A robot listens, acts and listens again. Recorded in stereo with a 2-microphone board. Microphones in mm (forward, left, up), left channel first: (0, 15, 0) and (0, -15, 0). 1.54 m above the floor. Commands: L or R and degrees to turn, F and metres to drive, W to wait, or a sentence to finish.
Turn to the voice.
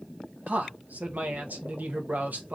R65
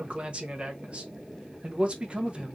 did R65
R40
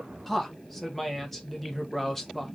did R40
Facing the man speaking.